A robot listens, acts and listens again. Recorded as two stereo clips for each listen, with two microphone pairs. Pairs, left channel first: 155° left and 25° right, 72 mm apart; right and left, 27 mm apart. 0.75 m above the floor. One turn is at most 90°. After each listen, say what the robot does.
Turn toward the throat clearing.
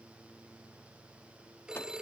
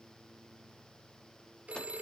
Keep listening.
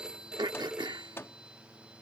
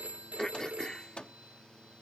Turn 30° right.
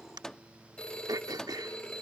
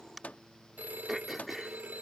Found it: throat clearing, straight ahead.